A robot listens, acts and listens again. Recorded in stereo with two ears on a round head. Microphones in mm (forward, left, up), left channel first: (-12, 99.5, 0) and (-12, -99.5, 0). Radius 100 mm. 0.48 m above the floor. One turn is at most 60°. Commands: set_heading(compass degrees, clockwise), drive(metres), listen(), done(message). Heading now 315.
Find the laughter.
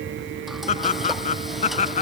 set_heading(285)
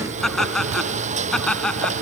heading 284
done("Found it: laughter, straight ahead.")